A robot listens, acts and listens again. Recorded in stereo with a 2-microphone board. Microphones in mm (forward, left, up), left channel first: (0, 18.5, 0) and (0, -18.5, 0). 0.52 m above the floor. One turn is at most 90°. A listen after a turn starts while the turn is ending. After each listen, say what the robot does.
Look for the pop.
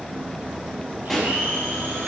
Turn 30° left.
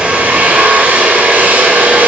Keep listening.
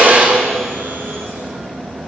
I heard a pop, but can't make it out now. It was about 25° right or 145° left.